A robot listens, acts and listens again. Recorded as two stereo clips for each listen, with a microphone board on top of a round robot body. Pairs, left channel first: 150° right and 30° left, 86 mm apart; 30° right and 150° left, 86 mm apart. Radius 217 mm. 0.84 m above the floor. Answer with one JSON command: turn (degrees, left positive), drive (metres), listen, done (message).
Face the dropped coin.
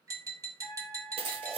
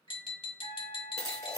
{"turn": 25}
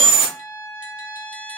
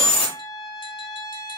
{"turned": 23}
{"done": "Found it: a dropped coin, straight ahead."}